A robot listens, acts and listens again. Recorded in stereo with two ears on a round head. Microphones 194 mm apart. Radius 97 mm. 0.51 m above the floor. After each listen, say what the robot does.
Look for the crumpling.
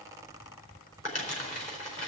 Turn 35° left.
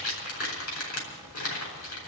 Turn 110° left.
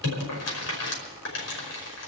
Turn 55° left.
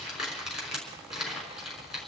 Facing the crumpling.